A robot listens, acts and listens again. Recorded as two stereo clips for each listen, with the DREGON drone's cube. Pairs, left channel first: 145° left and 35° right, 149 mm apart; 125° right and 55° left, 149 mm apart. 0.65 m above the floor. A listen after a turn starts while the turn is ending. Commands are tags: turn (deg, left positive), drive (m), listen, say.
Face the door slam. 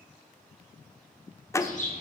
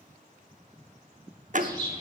<turn deg="75"/>
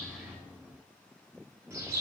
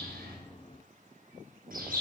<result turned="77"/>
<say>I heard a door slam from this way, but can't make it out now.</say>